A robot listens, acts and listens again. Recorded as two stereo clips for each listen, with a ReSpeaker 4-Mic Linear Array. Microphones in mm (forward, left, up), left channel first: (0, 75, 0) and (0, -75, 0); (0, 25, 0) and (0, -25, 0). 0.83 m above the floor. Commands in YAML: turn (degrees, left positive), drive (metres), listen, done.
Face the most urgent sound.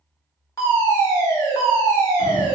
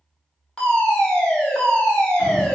turn: 20
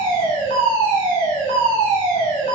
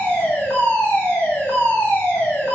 turn: 135
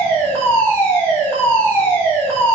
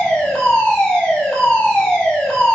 turn: 15
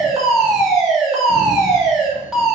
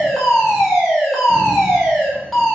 done: "Facing the fire alarm."